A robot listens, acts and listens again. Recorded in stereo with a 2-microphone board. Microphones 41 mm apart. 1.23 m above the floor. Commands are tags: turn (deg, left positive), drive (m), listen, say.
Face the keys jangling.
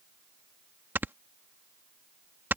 <listen/>
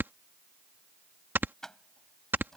<turn deg="30"/>
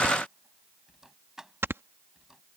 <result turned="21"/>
<turn deg="-10"/>
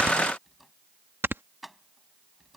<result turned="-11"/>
<say>Facing the keys jangling.</say>